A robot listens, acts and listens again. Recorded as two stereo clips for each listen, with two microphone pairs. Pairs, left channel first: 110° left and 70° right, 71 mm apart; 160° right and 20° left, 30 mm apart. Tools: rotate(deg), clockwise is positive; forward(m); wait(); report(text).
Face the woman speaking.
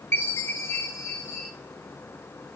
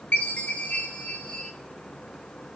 wait()
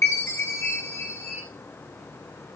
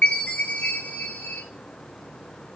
wait()
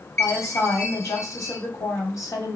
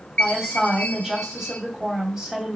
rotate(-85)
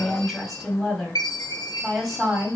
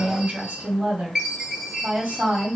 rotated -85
rotate(-20)
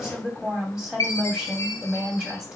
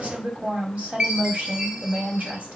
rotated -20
report("Found it: a woman speaking, straight ahead.")